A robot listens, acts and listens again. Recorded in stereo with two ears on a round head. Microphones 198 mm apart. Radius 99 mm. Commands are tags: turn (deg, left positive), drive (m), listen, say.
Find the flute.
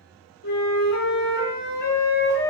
<turn deg="40"/>
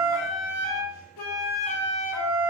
<turn deg="95"/>
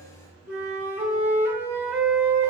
<turn deg="-10"/>
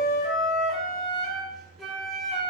<say>Facing the flute.</say>